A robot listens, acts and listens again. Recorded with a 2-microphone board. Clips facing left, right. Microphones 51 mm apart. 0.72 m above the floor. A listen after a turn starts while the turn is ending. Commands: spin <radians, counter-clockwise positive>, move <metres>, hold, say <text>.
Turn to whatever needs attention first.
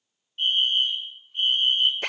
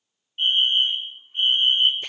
spin -0.52
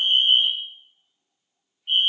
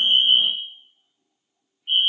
spin -0.17
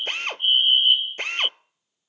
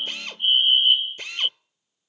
say Found it: a fire alarm, straight ahead.